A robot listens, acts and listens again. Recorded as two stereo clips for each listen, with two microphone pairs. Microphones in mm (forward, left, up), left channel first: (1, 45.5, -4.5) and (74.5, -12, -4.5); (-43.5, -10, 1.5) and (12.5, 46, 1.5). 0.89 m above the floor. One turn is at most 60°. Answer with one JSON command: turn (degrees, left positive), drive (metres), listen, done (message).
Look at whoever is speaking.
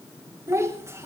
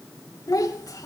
{"turn": -60}
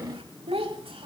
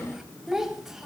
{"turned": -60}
{"turn": -40}
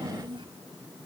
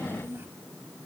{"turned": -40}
{"turn": -15}
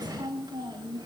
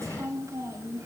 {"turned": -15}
{"done": "Facing the child speaking."}